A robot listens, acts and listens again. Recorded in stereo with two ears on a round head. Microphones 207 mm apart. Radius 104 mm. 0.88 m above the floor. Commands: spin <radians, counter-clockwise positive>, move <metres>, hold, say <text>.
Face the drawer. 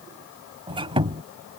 hold
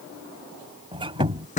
spin 0.61
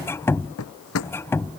spin 1.92
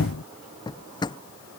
spin 0.35
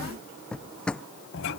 say Facing the drawer.